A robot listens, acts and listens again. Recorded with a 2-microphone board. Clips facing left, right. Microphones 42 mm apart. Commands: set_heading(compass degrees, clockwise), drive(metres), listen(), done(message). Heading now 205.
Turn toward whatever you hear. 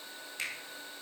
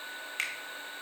set_heading(260)
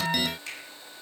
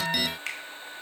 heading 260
set_heading(325)
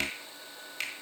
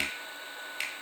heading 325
set_heading(335)
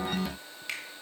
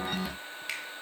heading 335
done("Found it: a finger snap, straight ahead.")